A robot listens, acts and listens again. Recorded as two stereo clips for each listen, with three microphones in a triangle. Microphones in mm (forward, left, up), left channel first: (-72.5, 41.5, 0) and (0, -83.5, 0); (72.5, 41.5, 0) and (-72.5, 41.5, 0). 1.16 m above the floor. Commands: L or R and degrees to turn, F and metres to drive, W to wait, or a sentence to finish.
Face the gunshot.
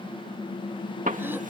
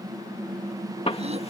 R45
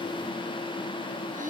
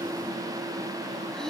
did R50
I heard a gunshot from this way, but can't make it out now.